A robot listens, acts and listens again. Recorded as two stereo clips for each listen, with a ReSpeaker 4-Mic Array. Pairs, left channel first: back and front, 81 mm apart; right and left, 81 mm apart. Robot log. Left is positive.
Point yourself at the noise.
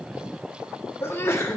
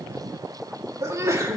note: The sneeze: 130° left.
cmd yaw +130
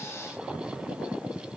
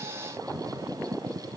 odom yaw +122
end: Facing where the sneeze came from. I can't hear it now.